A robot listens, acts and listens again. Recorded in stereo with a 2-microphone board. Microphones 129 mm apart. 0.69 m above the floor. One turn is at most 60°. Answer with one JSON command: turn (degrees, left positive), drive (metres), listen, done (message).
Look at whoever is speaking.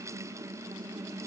{"listen": true}
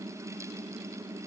{"listen": true}
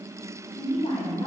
{"turn": 40}
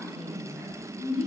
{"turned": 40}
{"done": "Facing the woman speaking."}